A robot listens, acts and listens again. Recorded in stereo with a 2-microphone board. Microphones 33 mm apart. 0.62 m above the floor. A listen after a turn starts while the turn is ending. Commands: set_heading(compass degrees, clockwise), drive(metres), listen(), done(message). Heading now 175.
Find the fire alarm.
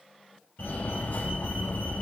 set_heading(105)
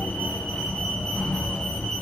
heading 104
set_heading(74)
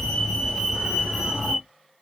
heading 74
done("Facing the fire alarm.")